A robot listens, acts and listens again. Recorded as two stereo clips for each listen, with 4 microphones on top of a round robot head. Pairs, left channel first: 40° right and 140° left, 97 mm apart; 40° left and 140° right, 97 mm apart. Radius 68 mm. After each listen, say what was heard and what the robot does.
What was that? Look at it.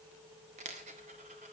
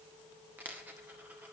The dropped coin: 145° left. Turn 145° left.
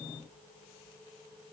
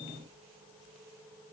Facing where the dropped coin came from. I can't hear it now.